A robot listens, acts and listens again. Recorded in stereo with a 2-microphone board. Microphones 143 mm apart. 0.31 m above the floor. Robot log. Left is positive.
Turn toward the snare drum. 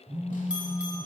cmd idle
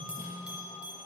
cmd idle
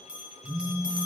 end: I can't make out a snare drum, only a phone buzzing and a bell.